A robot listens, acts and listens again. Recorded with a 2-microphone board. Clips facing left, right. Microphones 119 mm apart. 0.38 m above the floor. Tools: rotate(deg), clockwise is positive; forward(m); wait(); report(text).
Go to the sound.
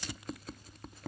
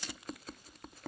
wait()
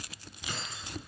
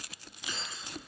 rotate(-50)
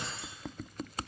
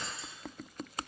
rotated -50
rotate(-85)
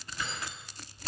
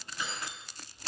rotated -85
forward(1.0)
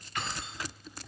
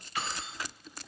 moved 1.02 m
forward(1.0)
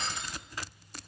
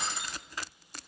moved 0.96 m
rotate(10)
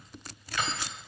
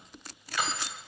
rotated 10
forward(1.0)
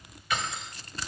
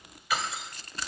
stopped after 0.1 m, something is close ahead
report("I am next to the keys jangling.")